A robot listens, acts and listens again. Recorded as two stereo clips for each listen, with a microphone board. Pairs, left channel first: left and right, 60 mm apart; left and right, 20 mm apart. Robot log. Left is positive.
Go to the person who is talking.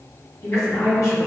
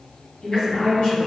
note: The woman speaking: about 70° left or 110° left.
cmd yaw +70
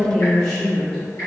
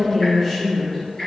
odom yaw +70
note: So it is at 15° left.
cmd yaw +15
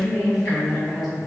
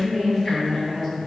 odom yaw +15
cmd fwd 1.0
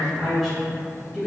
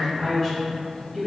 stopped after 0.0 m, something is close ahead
end: Blocked. The woman speaking is further on, straight ahead.